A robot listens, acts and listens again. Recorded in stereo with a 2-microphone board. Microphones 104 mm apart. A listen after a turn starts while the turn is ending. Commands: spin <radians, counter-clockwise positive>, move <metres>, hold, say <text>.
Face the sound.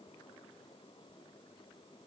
hold
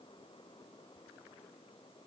hold
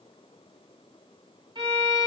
spin -0.79
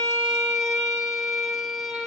say Found it: a violin, straight ahead.